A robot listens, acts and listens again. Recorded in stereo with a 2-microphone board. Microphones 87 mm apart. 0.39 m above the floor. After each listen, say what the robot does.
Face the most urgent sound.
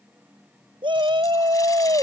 Turn 75° right.
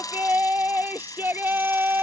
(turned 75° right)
Turn 25° right.
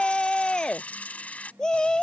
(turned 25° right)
Turn 10° left.
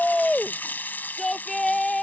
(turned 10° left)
Facing the shout.